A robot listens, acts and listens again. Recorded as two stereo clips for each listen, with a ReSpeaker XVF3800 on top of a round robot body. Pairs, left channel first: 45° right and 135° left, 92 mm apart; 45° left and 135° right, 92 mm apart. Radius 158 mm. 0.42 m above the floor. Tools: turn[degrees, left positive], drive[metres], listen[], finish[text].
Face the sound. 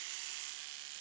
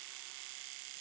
Action: listen[]
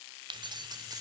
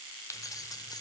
Thought: The keys jangling: 90° left.
Action: turn[90]
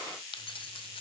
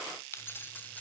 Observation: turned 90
Thought: The keys jangling is now 25° right.
Action: turn[-25]
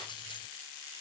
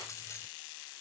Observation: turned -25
Action: listen[]
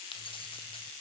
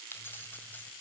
Thought: The keys jangling is now 25° right.
Action: turn[-25]
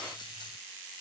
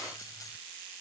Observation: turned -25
Action: listen[]
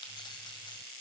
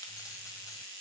Action: listen[]
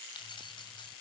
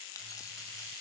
Action: finish[I heard keys jangling from this way, but can't make it out now.]